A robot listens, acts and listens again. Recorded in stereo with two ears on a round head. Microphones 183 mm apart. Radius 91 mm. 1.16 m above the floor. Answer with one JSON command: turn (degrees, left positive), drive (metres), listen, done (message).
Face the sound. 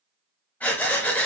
{"turn": 30}
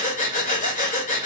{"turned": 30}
{"turn": 135}
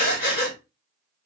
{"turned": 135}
{"turn": 50}
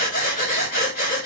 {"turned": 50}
{"turn": 45}
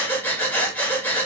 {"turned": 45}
{"turn": 10}
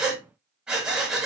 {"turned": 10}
{"done": "Found it: breathing, straight ahead."}